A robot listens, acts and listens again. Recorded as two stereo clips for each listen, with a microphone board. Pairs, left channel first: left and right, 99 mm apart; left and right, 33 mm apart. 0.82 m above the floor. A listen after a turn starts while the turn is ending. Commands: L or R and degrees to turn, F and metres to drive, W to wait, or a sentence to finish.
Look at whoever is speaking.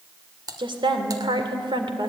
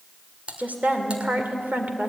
R60
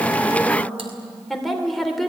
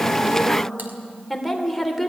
Found it: a woman speaking, straight ahead, 2 to 4 m away.